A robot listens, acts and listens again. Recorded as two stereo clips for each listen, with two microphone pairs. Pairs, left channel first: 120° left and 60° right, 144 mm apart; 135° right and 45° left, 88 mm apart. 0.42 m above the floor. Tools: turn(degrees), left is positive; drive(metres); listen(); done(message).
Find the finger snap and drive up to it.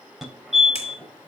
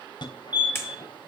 turn(degrees=165)
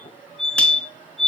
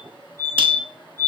listen()
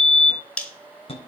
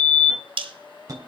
turn(degrees=35)
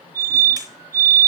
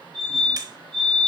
listen()
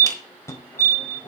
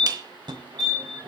listen()
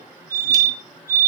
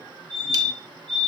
done("I heard a finger snap from this way, but can't make it out now. I did not reach it.")